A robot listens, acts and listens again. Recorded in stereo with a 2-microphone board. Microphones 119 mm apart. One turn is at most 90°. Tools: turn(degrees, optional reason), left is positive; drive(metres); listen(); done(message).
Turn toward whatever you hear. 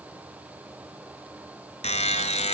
turn(degrees=70, reason="The buzzer: about 70° left or 110° left.")
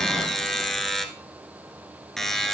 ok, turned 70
done("Facing the buzzer, 1 to 2 m away.")